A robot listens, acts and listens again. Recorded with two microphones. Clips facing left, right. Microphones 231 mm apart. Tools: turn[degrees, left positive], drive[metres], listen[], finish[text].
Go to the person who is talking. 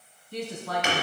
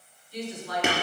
Thought: The woman speaking: about 65° left or 115° left.
Action: turn[65]
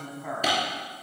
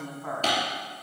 Thought: So it is at 10° left.
Action: turn[10]
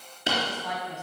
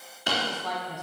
Action: drive[1.0]
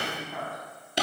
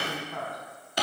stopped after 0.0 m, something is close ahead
Action: finish[Something is in my way. I am facing the woman speaking but have not reached it.]